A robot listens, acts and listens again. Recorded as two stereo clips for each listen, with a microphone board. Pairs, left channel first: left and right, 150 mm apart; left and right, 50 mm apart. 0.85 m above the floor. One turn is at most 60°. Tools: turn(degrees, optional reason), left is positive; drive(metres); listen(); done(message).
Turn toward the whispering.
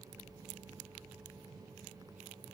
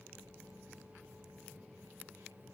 listen()
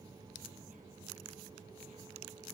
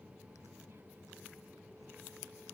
listen()
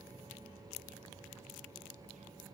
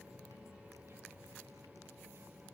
done("I can't make out whispering.")